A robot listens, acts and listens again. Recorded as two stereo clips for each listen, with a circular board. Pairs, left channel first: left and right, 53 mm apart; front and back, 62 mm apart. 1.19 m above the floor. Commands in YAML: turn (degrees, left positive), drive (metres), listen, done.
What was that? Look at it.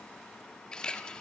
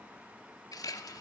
turn: 15
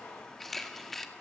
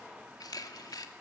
done: "Facing the camera shutter."